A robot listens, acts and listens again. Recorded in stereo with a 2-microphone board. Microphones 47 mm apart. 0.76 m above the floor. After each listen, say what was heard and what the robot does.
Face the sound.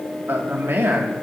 The man speaking: about 60° right or 120° right. Turn 60° right.
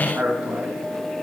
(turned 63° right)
So it is at 35° right. Turn 35° right.
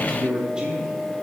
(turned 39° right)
The man speaking is now 15° right. Turn 15° right.
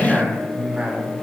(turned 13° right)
The man speaking is now 20° right. Turn 20° right.
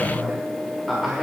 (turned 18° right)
Found it: a man speaking, straight ahead.